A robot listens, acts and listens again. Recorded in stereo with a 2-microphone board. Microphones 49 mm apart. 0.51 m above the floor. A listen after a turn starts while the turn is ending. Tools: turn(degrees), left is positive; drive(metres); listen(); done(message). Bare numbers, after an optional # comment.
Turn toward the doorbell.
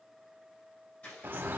listen()
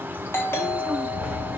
# The doorbell: about 60° left or 120° left.
turn(60)
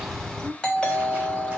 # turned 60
# So it is at 25° left.
turn(25)
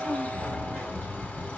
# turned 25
listen()
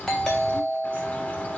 # The doorbell is now 10° left.
turn(10)
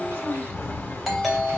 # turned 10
done("Found it: a doorbell, straight ahead, 2 to 4 m away.")